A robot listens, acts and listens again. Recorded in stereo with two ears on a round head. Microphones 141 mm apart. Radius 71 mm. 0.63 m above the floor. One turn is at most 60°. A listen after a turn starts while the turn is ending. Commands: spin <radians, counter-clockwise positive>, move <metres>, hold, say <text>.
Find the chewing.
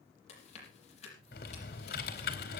spin 0.79
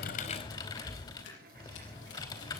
spin 1.05
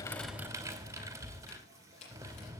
spin 0.79
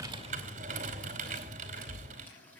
hold
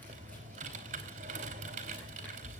hold
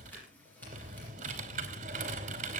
say I heard chewing from this way, but can't make it out now.